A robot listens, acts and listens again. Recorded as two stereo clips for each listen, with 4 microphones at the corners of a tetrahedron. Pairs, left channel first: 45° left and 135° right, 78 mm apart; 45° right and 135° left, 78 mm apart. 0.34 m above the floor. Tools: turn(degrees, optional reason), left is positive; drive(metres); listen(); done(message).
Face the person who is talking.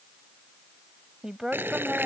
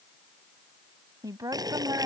turn(degrees=150, reason="The woman speaking: 150° left.")
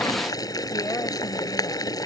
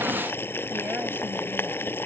listen()
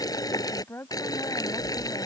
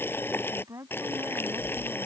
turn(degrees=100, reason="The woman speaking is now 100° left.")
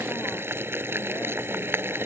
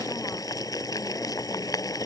listen()
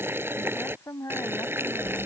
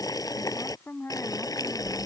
done("Found it: a woman speaking, straight ahead.")